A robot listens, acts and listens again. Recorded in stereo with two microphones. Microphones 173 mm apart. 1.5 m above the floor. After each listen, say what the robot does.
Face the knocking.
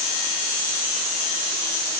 Keep listening.
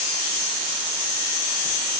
Keep listening.
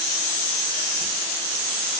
I can't make out knocking to turn to.